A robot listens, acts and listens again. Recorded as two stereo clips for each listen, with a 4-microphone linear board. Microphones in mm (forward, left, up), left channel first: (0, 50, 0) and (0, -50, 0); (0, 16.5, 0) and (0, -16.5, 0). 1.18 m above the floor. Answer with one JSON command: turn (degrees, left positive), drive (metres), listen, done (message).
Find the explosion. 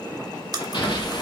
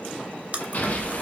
{"turn": 60}
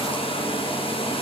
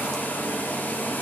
{"listen": true}
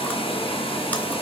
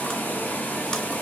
{"done": "I heard an explosion, but can't make it out now. It was about straight ahead or 60° left."}